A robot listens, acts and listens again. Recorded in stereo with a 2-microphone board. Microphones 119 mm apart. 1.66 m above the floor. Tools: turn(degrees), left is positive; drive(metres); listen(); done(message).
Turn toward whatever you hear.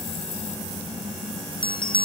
turn(degrees=45)
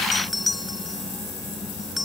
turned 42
done("Facing the bell.")